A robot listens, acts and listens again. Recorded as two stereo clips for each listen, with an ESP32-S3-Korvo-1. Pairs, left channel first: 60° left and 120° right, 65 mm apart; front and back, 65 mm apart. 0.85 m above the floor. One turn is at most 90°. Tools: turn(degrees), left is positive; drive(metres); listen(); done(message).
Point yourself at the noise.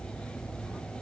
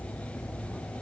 listen()
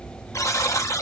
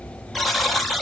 turn(degrees=90)
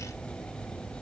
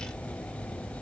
listen()
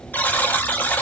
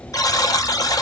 done("Found it: a buzzer, straight ahead.")